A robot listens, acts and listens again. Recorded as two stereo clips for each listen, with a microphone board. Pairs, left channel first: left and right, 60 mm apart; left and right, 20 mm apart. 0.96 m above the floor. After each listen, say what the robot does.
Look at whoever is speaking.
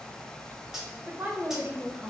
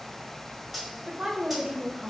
Turn 35° right.
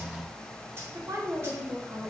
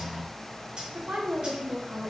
Turn 105° right.
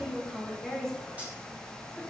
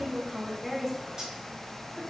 Facing the woman speaking, under 1 m away.